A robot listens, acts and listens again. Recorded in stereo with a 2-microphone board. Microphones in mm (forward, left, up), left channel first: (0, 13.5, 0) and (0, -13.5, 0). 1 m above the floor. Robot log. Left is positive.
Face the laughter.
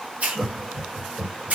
cmd yaw -30
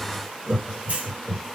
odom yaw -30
cmd yaw +30
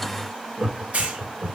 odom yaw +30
note: So it is at 40° right.
cmd yaw -40
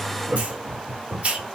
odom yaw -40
note: The laughter is now 45° right.
cmd yaw -45
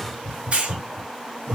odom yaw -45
note: The laughter is now 15° right.
cmd yaw -15
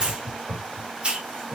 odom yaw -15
note: The laughter is now 10° right.
cmd yaw -10
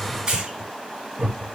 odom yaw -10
end: Facing the laughter, 1 to 2 m away.